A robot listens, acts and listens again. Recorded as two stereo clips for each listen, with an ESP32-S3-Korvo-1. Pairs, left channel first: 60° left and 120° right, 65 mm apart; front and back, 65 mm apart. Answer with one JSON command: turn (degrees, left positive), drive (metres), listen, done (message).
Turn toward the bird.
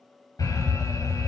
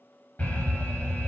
{"listen": true}
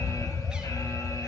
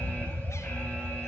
{"listen": true}
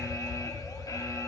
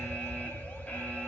{"done": "I can't make out a bird, only an alarm."}